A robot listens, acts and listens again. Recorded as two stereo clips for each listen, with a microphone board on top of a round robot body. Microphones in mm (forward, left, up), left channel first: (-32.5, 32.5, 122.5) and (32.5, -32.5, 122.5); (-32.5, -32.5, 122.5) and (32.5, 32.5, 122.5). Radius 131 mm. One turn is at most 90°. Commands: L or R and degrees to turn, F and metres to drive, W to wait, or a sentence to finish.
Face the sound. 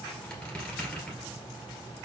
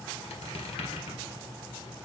R90
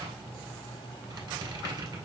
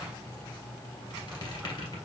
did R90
R90
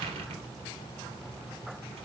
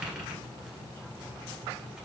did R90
R35
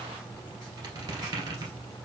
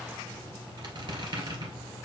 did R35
Facing the squeak, 1 to 2 m away.